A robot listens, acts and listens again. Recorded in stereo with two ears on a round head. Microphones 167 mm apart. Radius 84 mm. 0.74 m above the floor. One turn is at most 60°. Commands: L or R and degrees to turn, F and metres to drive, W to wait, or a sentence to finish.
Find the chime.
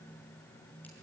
W
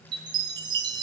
R25
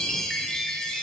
Found it: a chime, straight ahead.